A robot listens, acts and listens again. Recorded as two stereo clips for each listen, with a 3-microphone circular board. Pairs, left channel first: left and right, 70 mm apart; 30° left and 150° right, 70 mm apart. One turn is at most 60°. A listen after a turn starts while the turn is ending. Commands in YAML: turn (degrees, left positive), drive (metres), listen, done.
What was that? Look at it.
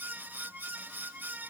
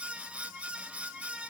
listen: true
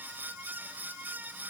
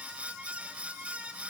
listen: true
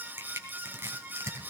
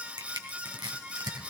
turn: -60
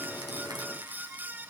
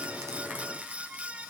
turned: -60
turn: -60
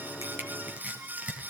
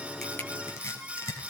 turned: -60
turn: -20
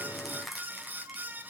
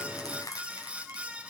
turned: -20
done: "Found it: crushing, straight ahead."